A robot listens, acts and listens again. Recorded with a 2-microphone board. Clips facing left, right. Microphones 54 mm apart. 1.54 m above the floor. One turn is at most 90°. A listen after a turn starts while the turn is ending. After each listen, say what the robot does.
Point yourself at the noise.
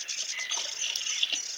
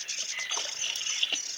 Turn 20° right.
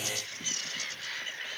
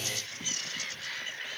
Keep listening.
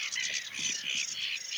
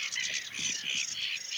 I heard a splash, but can't make it out now. It was about straight ahead or 140° right.